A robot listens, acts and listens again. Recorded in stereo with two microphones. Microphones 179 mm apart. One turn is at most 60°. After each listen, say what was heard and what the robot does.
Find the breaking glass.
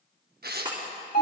The breaking glass: about 25° right or 155° right. Turn 25° right.
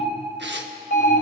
Keep listening.
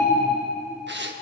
I heard breaking glass, but can't make it out now. It was about straight ahead or 130° right.